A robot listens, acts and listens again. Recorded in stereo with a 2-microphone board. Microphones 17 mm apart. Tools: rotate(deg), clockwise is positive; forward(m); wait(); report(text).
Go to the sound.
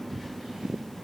wait()
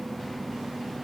wait()
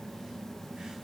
report("I can't make out anything.")